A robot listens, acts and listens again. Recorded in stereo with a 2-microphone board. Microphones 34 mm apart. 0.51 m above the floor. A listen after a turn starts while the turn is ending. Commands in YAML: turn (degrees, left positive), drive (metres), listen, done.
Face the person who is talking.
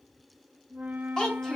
turn: 20
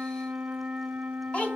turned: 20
turn: 140
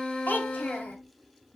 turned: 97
turn: 45
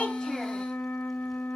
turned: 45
listen: true
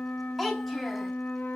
done: "Found it: a child speaking, straight ahead."